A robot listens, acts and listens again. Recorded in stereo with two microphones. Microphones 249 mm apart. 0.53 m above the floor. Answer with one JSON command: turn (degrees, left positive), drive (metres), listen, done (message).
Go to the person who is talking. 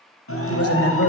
{"turn": 65}
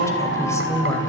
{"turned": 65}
{"turn": 10}
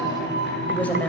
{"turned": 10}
{"drive": 1.0}
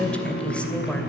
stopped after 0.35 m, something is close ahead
{"done": "Something is in my way. I am facing the woman speaking but have not reached it."}